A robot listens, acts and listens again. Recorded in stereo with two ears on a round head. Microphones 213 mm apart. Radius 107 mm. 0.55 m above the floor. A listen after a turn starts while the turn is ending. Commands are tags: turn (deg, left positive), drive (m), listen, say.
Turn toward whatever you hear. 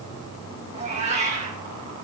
<turn deg="-30"/>
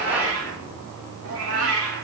<turn deg="-110"/>
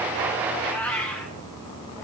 <turn deg="10"/>
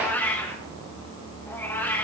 <turn deg="10"/>
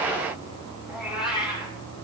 <say>Facing the cat meowing, over 4 m away.</say>